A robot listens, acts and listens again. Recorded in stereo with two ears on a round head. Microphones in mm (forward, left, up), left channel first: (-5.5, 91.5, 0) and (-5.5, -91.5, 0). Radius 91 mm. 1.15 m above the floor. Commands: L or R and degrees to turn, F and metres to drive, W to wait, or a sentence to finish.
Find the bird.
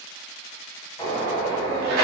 L15
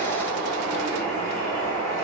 Facing the bird.